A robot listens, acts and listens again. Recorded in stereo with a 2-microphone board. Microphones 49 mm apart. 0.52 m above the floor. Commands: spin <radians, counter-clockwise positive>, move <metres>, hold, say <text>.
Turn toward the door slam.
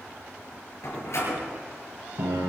spin 1.13
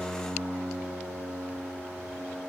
hold
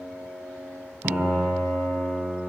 say I heard a door slam, but can't make it out now. It was about straight ahead or 50° left.